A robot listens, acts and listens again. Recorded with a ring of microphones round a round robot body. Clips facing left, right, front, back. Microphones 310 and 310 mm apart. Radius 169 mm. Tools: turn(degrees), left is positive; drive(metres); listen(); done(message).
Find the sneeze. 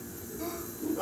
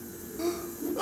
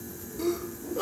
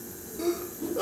turn(degrees=-80)
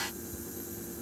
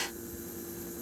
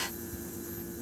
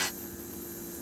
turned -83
done("I heard a sneeze from this way, but can't make it out now.")